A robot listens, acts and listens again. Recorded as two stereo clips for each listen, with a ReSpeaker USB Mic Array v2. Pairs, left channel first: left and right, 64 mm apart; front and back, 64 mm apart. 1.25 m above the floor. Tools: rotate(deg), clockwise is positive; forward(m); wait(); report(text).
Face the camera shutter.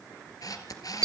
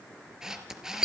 rotate(-100)
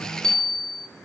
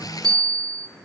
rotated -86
rotate(-15)
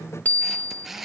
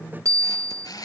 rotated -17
report("Found it: a camera shutter, straight ahead.")